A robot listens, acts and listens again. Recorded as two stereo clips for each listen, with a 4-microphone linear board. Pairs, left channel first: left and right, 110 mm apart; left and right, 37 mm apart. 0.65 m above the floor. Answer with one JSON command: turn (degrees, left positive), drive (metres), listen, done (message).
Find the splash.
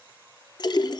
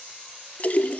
{"turn": 40}
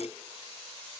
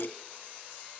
{"listen": true}
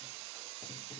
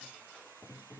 {"done": "I heard a splash, but can't make it out now. It was about straight ahead or 100° left."}